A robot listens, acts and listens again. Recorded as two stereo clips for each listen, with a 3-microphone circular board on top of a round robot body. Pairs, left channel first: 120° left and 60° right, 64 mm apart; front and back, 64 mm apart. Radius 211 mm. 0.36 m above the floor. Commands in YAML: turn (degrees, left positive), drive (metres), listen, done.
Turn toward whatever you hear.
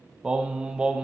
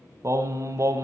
turn: -135
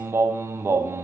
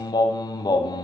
turn: -10
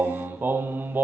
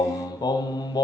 done: "Found it: singing, straight ahead."